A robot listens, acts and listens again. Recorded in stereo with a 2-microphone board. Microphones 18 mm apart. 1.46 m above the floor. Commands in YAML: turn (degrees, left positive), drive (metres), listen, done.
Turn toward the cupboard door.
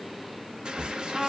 turn: -70
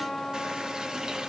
listen: true
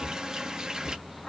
done: "Facing the cupboard door."